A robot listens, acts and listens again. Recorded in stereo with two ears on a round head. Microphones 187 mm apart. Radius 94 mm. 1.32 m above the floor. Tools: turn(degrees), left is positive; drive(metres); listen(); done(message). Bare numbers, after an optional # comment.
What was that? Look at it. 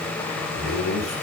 turn(90)
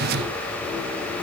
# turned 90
listen()
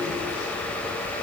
listen()
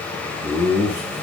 # The laughter is now 25° left.
turn(25)
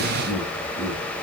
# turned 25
# The laughter is now 10° left.
turn(10)
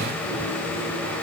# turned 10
listen()
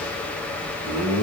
done("Facing the laughter, over 4 m away.")